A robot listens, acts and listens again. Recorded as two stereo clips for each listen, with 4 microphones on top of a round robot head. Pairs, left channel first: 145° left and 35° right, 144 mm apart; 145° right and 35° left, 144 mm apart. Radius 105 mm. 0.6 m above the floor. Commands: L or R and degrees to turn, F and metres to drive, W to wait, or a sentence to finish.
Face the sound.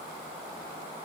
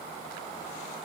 W
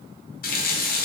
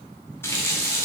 L145
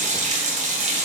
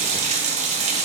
Found it: a running tap, straight ahead.